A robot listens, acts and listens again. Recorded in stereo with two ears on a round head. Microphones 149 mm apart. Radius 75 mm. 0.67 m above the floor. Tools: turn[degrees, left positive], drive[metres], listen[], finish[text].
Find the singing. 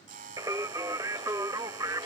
Thought: The singing: about 20° right or 160° right.
Action: turn[-20]
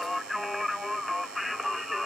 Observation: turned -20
Action: finish[Found it: singing, straight ahead.]